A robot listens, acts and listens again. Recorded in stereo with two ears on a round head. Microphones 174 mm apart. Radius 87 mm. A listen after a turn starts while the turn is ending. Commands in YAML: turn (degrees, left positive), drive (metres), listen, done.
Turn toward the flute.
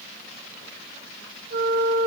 turn: -60
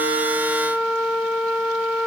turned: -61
done: "Found it: a flute, straight ahead."